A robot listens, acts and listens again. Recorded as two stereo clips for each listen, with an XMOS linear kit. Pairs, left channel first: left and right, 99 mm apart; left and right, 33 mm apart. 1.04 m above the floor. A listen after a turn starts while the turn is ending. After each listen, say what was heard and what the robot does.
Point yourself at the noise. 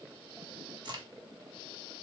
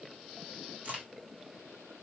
The crack: about 50° right or 130° right. Turn 50° right.
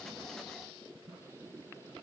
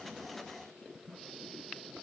Keep listening.
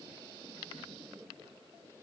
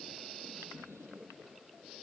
I heard a crack, but can't make it out now. It was about straight ahead or 80° right.